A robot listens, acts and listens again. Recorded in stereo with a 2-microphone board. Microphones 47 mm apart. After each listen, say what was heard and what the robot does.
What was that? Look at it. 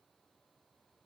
Keep listening.
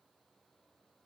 Keep listening.
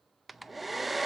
Turn 30° left.
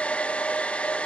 So it is at 150° left. Turn 150° left.
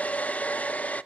The hair dryer is now 30° left. Turn 30° left.
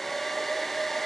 Found it: a hair dryer, straight ahead, under 1 m away.